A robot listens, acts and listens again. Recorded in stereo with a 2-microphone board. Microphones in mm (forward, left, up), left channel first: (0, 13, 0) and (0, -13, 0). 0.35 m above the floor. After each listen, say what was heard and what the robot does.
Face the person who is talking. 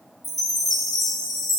Keep listening.
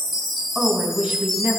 The woman speaking: about 65° right or 115° right. Turn 65° right.
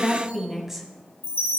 So it is at 15° right. Turn 15° right.
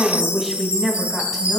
Found it: a woman speaking, straight ahead, 2 to 4 m away.